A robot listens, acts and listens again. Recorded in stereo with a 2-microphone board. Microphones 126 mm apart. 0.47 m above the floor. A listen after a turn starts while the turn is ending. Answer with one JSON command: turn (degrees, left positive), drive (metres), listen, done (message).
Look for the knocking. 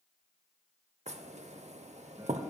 {"turn": -60}
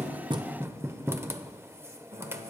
{"turn": -25}
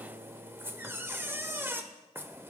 {"turn": -20}
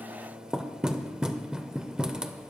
{"turn": -10}
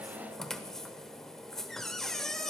{"done": "Facing the knocking, under 1 m away."}